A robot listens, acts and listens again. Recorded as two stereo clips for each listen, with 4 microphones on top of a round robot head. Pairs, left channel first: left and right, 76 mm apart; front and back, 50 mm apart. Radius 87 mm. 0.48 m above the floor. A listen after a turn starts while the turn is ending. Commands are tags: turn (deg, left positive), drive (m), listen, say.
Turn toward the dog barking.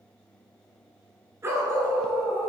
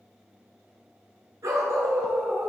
<turn deg="-150"/>
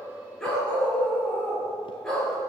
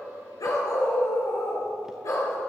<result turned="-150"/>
<turn deg="10"/>
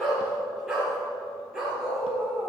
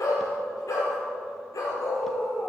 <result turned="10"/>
<say>Facing the dog barking, over 4 m away.</say>